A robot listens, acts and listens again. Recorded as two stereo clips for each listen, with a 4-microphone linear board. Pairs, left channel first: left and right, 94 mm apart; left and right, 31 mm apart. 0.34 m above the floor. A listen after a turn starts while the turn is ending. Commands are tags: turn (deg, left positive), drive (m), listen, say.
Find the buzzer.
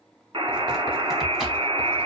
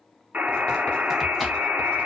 <turn deg="-90"/>
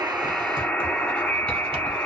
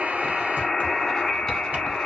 <turn deg="10"/>
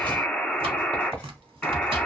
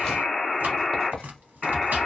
<say>Facing the buzzer, 1 to 2 m away.</say>